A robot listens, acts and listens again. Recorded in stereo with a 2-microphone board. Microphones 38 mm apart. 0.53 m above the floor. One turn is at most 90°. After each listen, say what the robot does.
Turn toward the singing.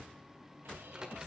Keep listening.
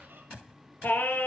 Turn 55° left.
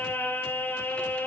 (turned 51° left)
Turn 70° left.
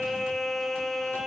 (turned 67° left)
Found it: singing, straight ahead.